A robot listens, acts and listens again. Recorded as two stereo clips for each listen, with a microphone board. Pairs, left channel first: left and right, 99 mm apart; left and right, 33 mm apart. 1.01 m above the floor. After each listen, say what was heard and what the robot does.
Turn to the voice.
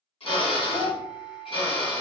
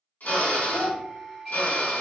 The child speaking: about 50° left or 130° left. Turn 50° left.
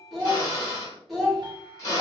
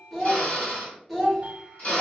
Facing the child speaking, 1 to 2 m away.